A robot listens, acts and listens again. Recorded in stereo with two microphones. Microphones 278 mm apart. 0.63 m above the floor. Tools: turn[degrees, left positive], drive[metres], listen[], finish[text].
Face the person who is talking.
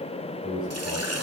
Thought: The man speaking: about 15° right or 165° right.
Action: turn[-15]
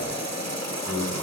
Action: finish[Found it: a man speaking, straight ahead.]